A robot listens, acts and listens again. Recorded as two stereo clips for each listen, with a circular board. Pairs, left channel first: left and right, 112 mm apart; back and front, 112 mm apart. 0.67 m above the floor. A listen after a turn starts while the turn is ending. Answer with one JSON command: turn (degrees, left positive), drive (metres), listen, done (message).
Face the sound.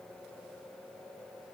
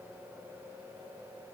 {"listen": true}
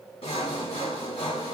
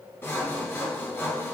{"turn": 110}
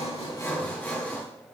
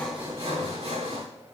{"turn": 15}
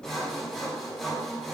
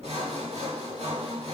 {"done": "Facing the sawing, 1 to 2 m away."}